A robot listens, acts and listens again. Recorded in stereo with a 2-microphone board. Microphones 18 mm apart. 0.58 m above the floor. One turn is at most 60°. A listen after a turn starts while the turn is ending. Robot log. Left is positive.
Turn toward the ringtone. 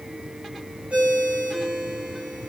note: The ringtone: about 70° right or 110° right.
cmd yaw -60
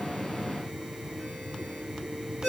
note: So it is at 10° right.
cmd yaw -10
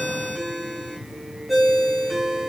end: Found it: a ringtone, straight ahead, 2 to 4 m away.